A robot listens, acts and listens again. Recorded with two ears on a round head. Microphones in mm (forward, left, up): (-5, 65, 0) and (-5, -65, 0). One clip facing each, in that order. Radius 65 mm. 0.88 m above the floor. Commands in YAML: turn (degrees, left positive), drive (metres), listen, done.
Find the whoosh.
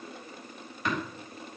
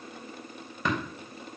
listen: true
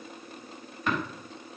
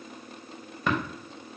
listen: true
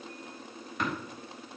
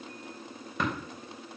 done: "I can't make out a whoosh, only tapping."